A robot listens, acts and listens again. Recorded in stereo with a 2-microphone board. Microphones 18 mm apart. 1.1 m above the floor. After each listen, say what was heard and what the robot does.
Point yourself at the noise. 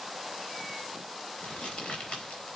Turn 90° left.
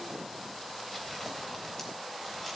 Keep listening.
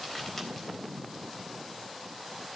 The crumpling is now 10° left. Turn 10° left.
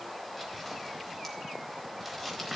Facing the crumpling, 2 to 4 m away.